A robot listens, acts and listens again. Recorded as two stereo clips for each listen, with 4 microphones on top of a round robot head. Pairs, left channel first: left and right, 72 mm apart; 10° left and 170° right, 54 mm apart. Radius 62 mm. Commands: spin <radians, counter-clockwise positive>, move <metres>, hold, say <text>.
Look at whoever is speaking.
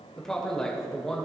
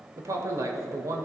spin 3.05
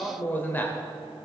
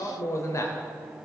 spin 0.44
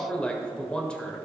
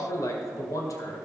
spin 0.26
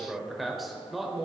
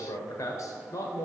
say Found it: a man speaking, straight ahead, 1 to 2 m away.